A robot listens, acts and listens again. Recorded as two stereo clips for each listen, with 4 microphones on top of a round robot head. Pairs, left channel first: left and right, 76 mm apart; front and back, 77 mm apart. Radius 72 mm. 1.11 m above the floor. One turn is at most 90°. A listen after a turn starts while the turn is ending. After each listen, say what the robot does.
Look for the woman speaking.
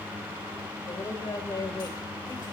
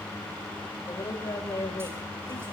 Turn 45° left.
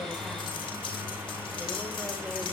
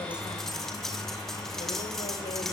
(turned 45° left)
Keep listening.
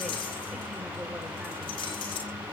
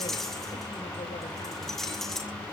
Keep listening.
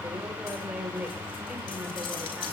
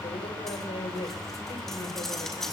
Turn 15° right.
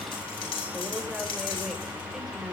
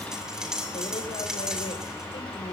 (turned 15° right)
Keep listening.
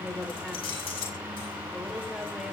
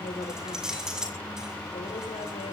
Facing the woman speaking, over 4 m away.